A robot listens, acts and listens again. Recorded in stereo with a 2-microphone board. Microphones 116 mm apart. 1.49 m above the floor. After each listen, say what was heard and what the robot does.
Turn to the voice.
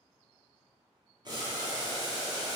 Keep listening.
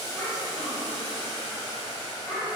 Turn 30° left.
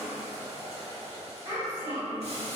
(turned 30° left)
So it is at 25° right. Turn 25° right.
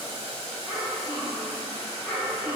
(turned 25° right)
The child speaking is now 15° right. Turn 15° right.
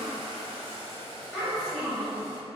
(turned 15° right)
Found it: a child speaking, straight ahead.